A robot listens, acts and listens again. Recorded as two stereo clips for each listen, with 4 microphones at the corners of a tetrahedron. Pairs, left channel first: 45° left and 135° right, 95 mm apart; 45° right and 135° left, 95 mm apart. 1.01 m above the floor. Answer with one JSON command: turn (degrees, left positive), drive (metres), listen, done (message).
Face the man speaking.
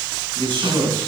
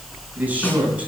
{"turn": -150}
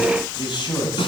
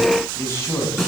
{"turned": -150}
{"turn": 15}
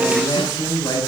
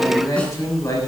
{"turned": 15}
{"turn": 10}
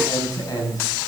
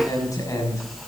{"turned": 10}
{"done": "Found it: a man speaking, straight ahead."}